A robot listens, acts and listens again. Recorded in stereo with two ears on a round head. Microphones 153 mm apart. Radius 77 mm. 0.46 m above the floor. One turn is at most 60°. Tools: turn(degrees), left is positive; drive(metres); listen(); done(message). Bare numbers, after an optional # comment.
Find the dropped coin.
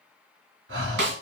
listen()
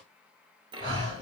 # The dropped coin: about 30° right or 150° right.
turn(-30)
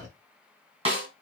listen()
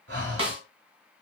done("I heard a dropped coin, but can't make it out now. It was about straight ahead or 120° right.")